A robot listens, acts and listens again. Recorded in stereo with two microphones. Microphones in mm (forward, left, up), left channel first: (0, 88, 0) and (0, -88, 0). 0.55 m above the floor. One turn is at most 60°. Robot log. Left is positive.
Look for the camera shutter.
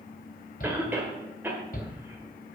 cmd idle
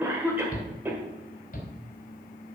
cmd idle
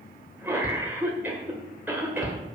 end: I can't make out a camera shutter, only a shout and a cough.